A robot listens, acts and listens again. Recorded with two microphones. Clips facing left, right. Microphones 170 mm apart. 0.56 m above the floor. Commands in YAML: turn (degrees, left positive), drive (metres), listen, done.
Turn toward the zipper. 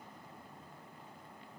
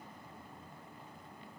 listen: true
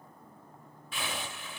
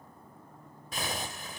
turn: -40
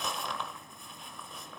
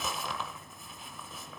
done: "Facing the zipper."